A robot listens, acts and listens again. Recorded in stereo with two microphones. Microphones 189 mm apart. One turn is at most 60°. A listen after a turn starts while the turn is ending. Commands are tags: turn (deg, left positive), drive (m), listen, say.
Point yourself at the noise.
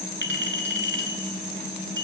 <turn deg="-60"/>
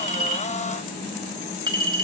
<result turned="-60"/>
<turn deg="-25"/>
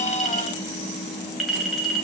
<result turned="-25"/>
<say>Found it: a clink, straight ahead.</say>